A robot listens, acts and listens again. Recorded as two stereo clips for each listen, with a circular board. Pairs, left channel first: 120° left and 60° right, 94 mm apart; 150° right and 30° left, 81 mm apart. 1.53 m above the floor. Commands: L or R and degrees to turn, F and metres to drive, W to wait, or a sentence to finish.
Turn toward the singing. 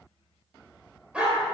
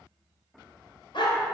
W
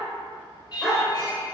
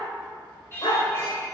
L170
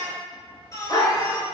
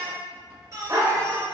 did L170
L75
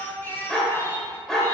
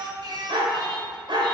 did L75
L55
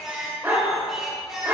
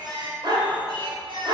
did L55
L25
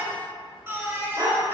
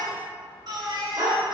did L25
Found it: singing, straight ahead.